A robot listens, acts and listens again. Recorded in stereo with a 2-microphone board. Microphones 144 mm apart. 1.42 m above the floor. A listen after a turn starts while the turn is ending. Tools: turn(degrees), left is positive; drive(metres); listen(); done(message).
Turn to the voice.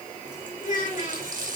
turn(degrees=65)
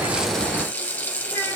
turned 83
listen()
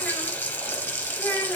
turn(degrees=10)
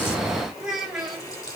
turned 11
done("Facing the child speaking.")